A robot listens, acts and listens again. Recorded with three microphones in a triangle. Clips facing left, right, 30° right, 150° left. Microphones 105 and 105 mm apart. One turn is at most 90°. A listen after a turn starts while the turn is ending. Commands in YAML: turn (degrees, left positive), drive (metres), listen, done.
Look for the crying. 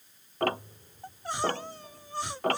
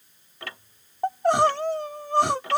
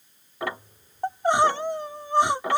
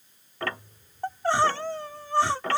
turn: -90
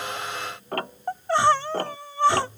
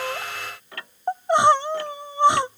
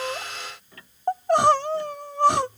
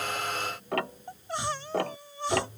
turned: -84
turn: -20
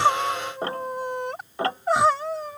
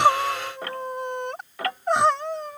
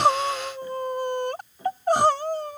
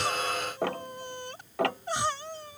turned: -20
done: "Facing the crying."